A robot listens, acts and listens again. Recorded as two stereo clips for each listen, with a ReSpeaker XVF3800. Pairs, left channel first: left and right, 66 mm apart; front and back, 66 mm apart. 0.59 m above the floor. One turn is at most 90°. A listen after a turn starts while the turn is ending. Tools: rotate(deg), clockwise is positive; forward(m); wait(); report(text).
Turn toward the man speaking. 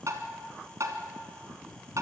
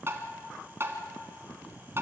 wait()
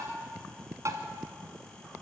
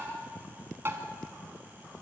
wait()
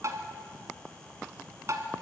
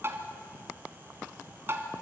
report("I can't make out a man speaking, only tapping.")